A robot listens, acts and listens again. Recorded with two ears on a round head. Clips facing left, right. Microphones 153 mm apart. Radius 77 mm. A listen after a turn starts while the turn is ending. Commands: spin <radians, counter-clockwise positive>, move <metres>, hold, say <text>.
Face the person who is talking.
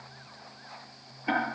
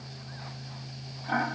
hold
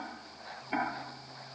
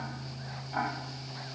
hold
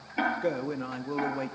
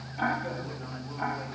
spin 1.22
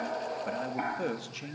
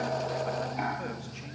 spin 0.70
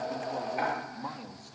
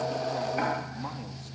hold
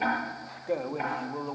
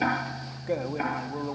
say Found it: a man speaking, straight ahead.